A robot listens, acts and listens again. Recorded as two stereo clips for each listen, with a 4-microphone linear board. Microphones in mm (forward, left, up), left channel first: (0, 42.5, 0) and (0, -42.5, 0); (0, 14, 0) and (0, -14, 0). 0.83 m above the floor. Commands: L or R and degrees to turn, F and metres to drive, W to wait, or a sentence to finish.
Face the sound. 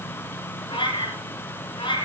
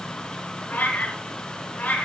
L65
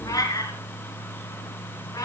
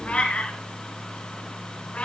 L45
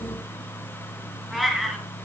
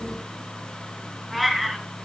Facing the cat meowing.